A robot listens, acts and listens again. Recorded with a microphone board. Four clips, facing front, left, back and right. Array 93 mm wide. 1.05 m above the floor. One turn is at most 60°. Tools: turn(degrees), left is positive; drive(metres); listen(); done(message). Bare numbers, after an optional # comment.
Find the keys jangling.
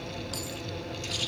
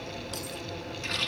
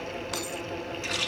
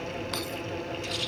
# The keys jangling: 135° right.
turn(-60)
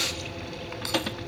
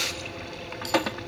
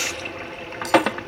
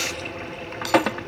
# The keys jangling is now 70° right.
turn(-60)
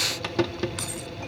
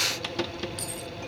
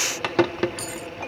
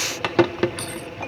# The keys jangling is now 35° right.
turn(-35)
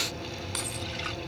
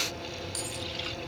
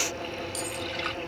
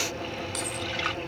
# The keys jangling is now 25° right.
turn(-25)
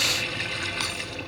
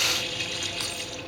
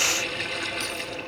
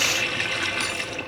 done("Found it: keys jangling, straight ahead.")